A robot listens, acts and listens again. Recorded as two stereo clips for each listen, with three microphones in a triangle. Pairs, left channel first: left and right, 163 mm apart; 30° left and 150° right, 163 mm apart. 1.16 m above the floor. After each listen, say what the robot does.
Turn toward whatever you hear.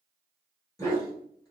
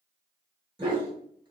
Turn 155° left.
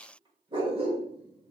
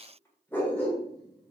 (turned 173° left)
Turn 50° right.
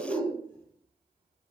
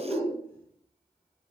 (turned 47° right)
Turn 35° right.
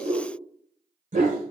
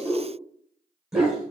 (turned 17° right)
Turn 65° right.
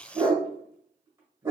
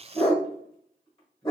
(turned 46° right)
Turn 20° right.
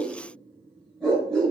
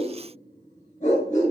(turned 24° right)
Found it: a dog barking, straight ahead.